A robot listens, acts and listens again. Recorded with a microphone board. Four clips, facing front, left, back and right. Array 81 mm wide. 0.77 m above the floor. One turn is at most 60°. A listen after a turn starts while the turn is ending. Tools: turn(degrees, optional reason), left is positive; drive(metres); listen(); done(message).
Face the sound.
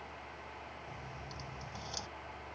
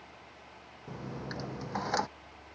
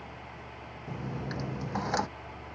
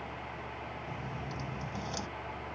turn(degrees=60, reason="The dropped coin: 140° left.")
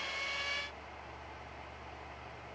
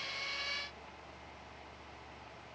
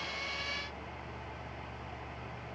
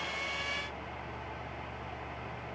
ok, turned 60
turn(degrees=60, reason="Nothing new. It was at 80° left.")
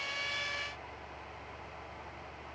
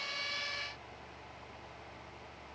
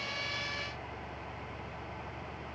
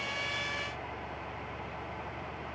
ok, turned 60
turn(degrees=20, reason="Nothing new. It was at 20° left.")
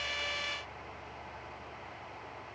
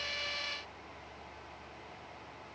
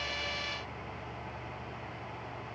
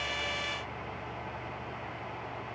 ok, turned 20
done("Facing where the dropped coin came from. I can't hear it now.")